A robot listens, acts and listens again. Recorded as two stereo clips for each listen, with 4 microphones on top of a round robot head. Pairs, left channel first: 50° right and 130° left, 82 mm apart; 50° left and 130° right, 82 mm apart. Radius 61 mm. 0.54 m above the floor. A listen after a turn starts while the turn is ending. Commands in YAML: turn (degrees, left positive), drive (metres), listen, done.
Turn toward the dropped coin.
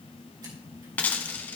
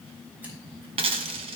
turn: -120
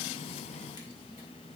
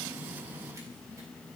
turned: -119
done: "Facing where the dropped coin came from. I can't hear it now."